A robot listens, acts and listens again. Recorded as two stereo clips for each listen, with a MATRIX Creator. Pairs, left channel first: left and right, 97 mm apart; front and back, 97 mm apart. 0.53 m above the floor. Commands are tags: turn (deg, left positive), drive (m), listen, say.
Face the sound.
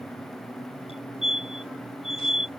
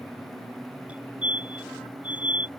<turn deg="105"/>
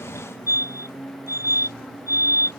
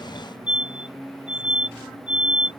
<turn deg="35"/>
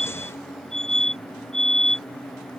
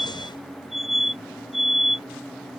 <say>Found it: a fire alarm, straight ahead.</say>